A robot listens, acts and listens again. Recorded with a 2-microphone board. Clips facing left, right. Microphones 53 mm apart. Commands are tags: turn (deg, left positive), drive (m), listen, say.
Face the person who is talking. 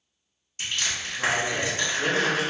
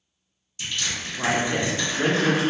<turn deg="-40"/>
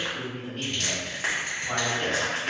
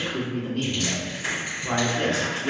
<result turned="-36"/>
<turn deg="-95"/>
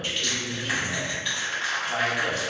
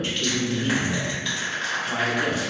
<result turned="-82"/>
<turn deg="-15"/>
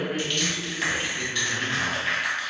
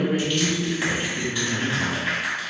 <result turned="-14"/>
<say>Found it: a man speaking, straight ahead, 1 to 2 m away.</say>